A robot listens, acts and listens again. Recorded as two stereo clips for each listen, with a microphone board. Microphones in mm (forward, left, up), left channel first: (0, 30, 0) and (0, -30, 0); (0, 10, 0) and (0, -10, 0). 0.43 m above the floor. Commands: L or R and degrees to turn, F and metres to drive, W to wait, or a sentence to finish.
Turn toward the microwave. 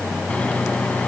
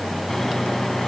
L20
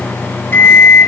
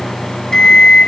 L140
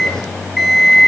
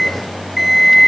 Facing the microwave.